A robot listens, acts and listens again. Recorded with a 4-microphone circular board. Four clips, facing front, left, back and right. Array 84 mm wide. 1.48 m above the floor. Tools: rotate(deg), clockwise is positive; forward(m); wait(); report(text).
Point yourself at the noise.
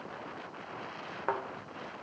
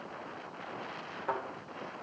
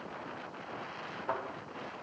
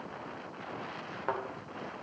rotate(20)
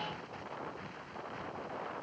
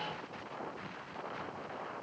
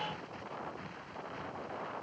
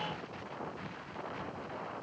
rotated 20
report("Facing where the thud came from. I can't hear it now.")